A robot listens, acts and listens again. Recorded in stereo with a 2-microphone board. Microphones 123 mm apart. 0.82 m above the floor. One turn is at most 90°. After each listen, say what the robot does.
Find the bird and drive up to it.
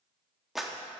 Keep listening.
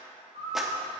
Turn 90° right.
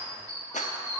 Turn 10° left.
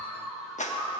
Drive 1.0 m forward.
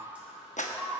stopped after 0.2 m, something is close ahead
Turn 10° right.
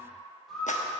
Something is in my way. I am facing the bird but have not reached it.